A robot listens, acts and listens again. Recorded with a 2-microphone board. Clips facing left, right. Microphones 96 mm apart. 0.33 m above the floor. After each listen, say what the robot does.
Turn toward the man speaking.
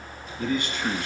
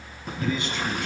Turn 55° left.
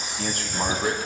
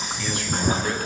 Turn 40° left.
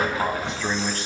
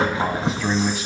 Found it: a man speaking, straight ahead, 2 to 4 m away.